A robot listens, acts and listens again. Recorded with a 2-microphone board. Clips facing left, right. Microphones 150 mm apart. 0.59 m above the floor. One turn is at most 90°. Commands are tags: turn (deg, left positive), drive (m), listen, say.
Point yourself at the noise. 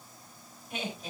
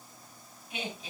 <turn deg="45"/>
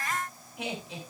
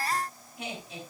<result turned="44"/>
<turn deg="90"/>
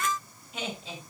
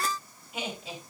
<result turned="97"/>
<turn deg="-10"/>
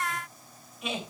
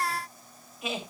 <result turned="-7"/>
<say>Found it: laughter, straight ahead, 2 to 4 m away.</say>